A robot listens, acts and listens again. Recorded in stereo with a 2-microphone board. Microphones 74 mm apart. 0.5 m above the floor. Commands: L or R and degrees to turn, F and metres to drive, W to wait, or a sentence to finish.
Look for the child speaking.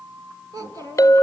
R65
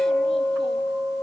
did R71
W
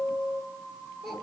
Found it: a child speaking, straight ahead, over 4 m away.